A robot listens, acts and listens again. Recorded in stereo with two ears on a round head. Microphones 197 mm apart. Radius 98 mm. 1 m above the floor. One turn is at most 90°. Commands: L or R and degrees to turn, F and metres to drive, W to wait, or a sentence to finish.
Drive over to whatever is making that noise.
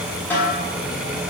L30
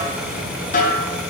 L90
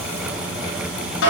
L65
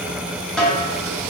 F1.0
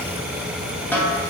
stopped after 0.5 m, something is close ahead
L10
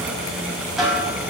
Blocked. The snare drum is further on, straight ahead.